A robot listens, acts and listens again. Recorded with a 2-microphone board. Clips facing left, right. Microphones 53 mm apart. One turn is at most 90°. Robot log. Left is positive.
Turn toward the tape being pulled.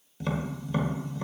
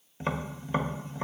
cmd idle
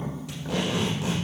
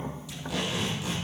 cmd yaw +90
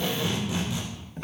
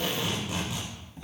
note: So it is at 10° right.
cmd yaw -10
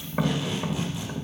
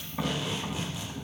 end: Found it: tape being pulled, straight ahead.